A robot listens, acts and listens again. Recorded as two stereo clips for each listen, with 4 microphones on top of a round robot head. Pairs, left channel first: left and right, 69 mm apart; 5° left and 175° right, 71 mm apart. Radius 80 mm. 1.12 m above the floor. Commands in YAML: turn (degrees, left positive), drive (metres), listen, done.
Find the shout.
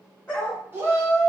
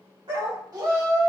turn: -150
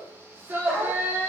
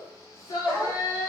turn: -30
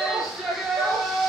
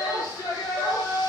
done: "Found it: a shout, straight ahead, under 1 m away."